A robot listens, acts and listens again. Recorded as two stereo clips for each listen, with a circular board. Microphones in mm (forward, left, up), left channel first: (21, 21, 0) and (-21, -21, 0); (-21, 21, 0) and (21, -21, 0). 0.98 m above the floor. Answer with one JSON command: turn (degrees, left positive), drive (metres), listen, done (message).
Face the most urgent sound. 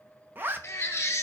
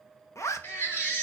{"turn": 90}
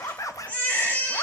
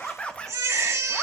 {"turn": -15}
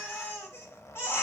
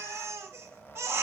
{"done": "Found it: a baby crying, straight ahead."}